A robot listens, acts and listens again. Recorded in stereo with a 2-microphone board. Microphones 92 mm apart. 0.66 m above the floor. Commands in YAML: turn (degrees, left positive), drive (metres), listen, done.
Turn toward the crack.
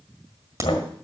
turn: -35
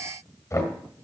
listen: true
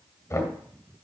done: "I heard a crack, but can't make it out now. It was about straight ahead or 110° right."